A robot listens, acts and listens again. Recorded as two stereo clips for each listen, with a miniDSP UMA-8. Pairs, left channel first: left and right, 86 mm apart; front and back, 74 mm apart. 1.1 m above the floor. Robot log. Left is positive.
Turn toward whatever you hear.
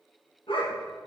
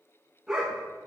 note: The dog barking: 95° left.
cmd yaw +95
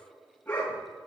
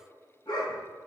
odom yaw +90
note: The dog barking is now 15° left.
cmd yaw +15
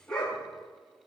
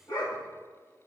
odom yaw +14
note: The dog barking is now 10° left.
cmd yaw +10
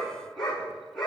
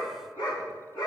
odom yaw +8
end: Facing the dog barking, over 4 m away.